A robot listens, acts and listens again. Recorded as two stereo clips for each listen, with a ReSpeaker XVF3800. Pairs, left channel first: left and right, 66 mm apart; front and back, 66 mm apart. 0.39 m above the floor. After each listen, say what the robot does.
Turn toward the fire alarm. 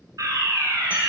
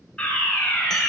Turn 70° right.
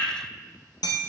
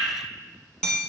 Turn 25° left.
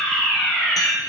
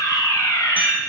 Turn 10° left.
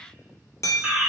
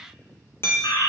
Found it: a fire alarm, straight ahead.